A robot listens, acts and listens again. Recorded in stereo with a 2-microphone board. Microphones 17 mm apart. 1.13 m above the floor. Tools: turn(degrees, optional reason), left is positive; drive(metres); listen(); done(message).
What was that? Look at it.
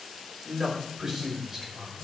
turn(degrees=-15, reason="The man speaking: about 15° right or 165° right.")
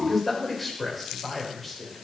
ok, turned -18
turn(degrees=10, reason="So it is at 10° left.")
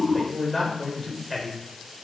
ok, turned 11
turn(degrees=10, reason="The man speaking is now 10° left.")
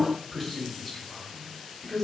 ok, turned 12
done("Found it: a man speaking, straight ahead.")